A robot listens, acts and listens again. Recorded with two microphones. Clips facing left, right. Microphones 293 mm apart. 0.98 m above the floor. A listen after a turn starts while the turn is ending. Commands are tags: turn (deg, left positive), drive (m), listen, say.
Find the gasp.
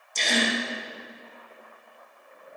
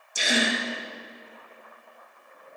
<turn deg="-30"/>
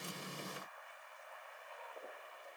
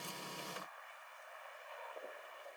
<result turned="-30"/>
<listen/>
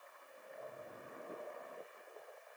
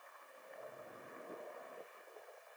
<say>I heard a gasp, but can't make it out now. It was about 20° left or 140° right.</say>